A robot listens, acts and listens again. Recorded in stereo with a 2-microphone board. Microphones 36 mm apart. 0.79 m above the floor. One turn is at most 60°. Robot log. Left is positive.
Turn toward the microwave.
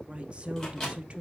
note: The microwave: about 20° left or 160° left.
cmd yaw +20
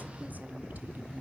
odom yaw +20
cmd idle
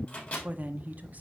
note: So it is at 140° left.
cmd yaw +60
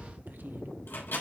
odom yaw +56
note: The microwave is now 85° left.
cmd yaw +60
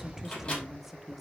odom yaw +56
note: The microwave is now 25° left.
cmd yaw +25
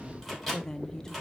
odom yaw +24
end: Found it: a microwave, straight ahead.